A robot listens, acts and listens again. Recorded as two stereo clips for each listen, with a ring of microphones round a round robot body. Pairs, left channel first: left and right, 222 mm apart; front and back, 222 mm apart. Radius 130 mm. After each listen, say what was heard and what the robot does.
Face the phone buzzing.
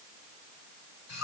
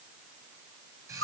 Keep listening.
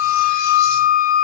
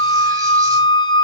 Keep listening.
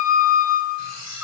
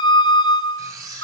I can't make out a phone buzzing to turn to.